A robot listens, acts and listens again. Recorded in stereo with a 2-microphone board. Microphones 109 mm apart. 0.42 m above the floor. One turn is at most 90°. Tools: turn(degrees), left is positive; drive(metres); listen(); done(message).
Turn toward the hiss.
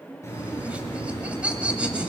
turn(degrees=30)
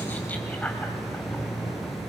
done("Found it: a hiss, straight ahead, over 4 m away.")